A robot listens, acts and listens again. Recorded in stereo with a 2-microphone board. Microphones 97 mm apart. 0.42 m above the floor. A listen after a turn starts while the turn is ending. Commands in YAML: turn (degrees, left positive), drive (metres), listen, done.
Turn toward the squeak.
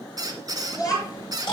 turn: -45
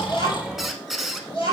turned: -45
done: "Facing the squeak, 1 to 2 m away."